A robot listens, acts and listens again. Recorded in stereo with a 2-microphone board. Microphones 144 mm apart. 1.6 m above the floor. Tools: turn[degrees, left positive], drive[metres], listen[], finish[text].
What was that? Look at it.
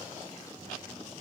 Action: listen[]
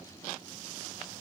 Action: listen[]
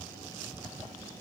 Action: finish[I can't make out anything to turn to.]